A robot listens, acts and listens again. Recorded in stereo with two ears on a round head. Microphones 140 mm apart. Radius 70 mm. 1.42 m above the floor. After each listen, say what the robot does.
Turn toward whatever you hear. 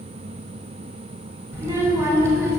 Turn 20° right.
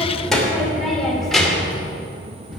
Turn 30° left.
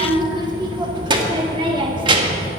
Turn 30° right.
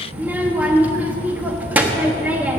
Turn 10° right.
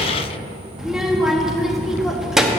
Found it: a child speaking, straight ahead.